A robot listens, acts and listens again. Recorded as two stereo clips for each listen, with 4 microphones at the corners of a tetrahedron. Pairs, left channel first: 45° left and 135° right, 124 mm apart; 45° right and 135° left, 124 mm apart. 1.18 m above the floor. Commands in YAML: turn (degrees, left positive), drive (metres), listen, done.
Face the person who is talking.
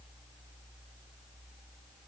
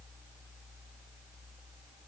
listen: true
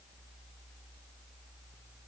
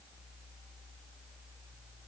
listen: true
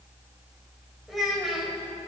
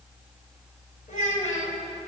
turn: -45
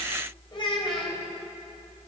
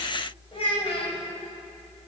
done: "Found it: a child speaking, straight ahead, 2 to 4 m away."